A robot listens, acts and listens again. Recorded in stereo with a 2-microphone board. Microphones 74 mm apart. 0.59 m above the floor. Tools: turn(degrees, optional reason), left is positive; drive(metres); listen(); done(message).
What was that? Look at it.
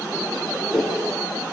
turn(degrees=-15, reason="The whoosh: about 15° right or 165° right.")
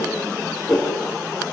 done("Found it: a whoosh, straight ahead.")